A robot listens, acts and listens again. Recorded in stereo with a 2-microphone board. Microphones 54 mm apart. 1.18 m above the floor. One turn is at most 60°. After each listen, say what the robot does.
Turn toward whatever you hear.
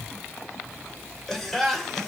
Turn 30° left.
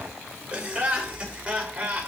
Turn 25° right.
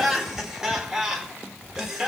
Turn 10° right.
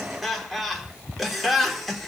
Found it: laughter, straight ahead, over 4 m away.